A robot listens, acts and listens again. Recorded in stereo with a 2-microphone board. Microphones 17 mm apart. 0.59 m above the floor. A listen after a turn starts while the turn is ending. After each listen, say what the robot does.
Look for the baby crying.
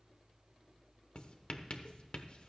Keep listening.
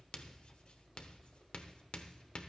Keep listening.
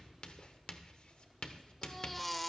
Turn 30° left.
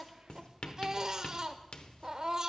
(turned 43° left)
Turn 35° right.
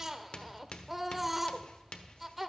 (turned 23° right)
Turn 10° right.
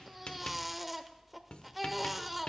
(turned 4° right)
Facing the baby crying.